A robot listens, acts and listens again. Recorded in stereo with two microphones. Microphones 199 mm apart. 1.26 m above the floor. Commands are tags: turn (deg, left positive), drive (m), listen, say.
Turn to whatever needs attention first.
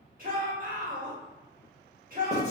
<turn deg="-45"/>
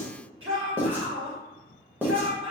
<turn deg="-90"/>
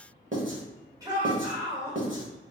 <turn deg="-20"/>
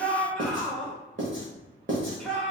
<say>Found it: a shout, straight ahead.</say>